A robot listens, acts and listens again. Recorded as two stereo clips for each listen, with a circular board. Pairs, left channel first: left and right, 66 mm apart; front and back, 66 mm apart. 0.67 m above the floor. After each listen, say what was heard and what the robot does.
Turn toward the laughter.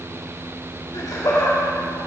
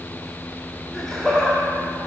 The laughter: 75° left. Turn 75° left.
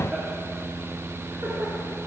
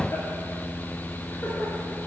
Keep listening.
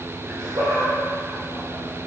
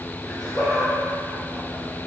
The laughter is now 65° right. Turn 65° right.
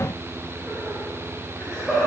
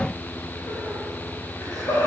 Facing the laughter, 2 to 4 m away.